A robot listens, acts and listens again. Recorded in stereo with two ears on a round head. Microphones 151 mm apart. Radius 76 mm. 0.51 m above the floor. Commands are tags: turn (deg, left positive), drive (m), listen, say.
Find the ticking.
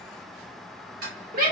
<turn deg="-55"/>
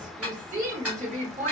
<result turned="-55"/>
<turn deg="-10"/>
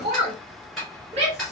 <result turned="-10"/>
<say>Found it: ticking, straight ahead, 1 to 2 m away.</say>